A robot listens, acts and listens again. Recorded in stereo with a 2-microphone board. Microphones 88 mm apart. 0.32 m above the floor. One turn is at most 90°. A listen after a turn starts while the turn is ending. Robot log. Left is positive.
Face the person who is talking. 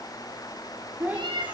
note: The child speaking: about 20° right or 160° right.
cmd yaw -20
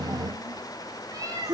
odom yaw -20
note: So it is at 140° right.
cmd yaw -90
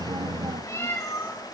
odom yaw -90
note: Nothing new. It was at 50° right.
cmd yaw -50
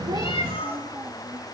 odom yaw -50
note: The child speaking is now 20° right.
cmd yaw -20
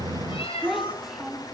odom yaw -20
end: Facing the child speaking.